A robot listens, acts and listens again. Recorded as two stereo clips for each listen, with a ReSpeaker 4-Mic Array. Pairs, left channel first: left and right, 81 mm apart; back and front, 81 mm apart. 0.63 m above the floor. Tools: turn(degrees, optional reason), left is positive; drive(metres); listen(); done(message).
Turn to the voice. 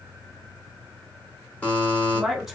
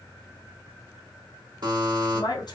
turn(degrees=-175, reason="The woman speaking: 175° right.")
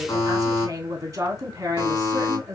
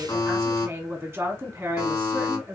turn(degrees=-50, reason="The woman speaking is now 50° right.")
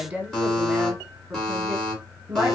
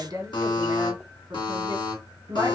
turn(degrees=-20, reason="The woman speaking is now 20° right.")
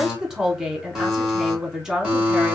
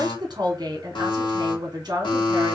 done("Found it: a woman speaking, straight ahead, 1 to 2 m away.")